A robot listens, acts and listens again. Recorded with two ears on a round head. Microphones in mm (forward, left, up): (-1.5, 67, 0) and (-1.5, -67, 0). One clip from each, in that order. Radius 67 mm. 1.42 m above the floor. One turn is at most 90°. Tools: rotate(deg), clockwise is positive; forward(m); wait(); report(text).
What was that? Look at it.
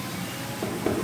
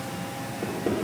rotate(-60)
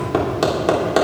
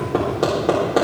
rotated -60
rotate(-60)
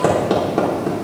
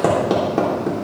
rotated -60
report("Found it: hammering, straight ahead, 2 to 4 m away.")